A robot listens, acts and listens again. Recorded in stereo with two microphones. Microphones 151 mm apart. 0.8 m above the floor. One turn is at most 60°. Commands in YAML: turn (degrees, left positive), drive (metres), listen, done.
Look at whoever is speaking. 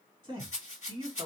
turn: -35
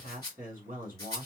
turn: -60
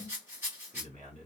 turn: -60
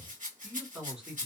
done: "Found it: a man speaking, straight ahead, 1 to 2 m away."